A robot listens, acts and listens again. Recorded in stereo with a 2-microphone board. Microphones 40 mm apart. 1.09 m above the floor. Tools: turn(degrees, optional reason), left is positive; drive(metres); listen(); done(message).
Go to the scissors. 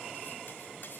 listen()
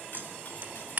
turn(degrees=-60, reason="The scissors: about 60° right or 120° right.")
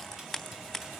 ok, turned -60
drive(metres=1.0)
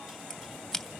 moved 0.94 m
drive(metres=1.0)
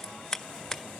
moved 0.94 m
turn(degrees=10, reason="The scissors is now 10° left.")
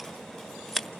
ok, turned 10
drive(metres=1.0)
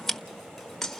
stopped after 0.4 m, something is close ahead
done("I am next to the scissors.")